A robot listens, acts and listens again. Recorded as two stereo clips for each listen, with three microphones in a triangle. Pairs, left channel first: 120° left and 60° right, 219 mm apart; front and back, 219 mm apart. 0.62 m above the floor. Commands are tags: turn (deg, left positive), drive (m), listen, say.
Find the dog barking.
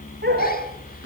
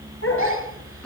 <turn deg="-20"/>
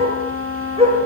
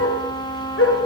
<say>Facing the dog barking, over 4 m away.</say>